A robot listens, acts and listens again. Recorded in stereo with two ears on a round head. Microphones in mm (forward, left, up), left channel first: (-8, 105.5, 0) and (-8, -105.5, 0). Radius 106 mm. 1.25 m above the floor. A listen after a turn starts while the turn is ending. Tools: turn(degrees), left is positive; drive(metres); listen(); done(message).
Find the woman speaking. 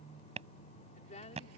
turn(degrees=30)
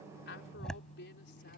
turn(degrees=130)
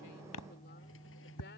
listen()
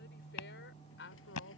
turn(degrees=55)
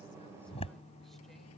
listen()
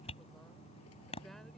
listen()
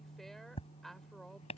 done("Facing the woman speaking.")